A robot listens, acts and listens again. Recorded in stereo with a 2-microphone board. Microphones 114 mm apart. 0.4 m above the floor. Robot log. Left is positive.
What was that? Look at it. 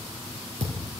note: The thud: about 75° right or 105° right.
cmd yaw -75
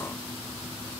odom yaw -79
cmd idle
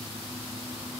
end: I heard a thud, but can't make it out now. It was about 5° left or 25° right.